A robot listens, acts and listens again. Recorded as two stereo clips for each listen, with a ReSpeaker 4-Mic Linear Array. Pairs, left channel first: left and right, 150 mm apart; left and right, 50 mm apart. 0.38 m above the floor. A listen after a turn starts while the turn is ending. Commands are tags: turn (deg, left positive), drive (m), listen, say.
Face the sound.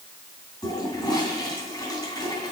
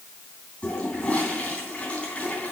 <turn deg="30"/>
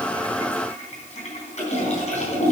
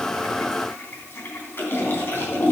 <turn deg="120"/>
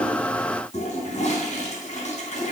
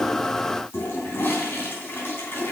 <turn deg="55"/>
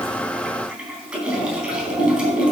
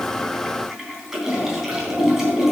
<turn deg="-10"/>
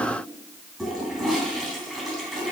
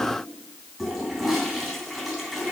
<say>Found it: a toilet flushing, straight ahead.</say>